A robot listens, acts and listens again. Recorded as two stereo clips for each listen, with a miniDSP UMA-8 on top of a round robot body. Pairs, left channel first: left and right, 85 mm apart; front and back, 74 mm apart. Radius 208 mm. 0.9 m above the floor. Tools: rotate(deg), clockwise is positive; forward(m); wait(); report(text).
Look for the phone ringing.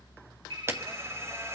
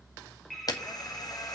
rotate(85)
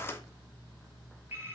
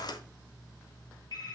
rotate(30)
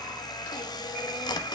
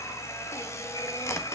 wait()
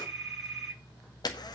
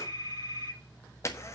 report("Found it: a phone ringing, straight ahead.")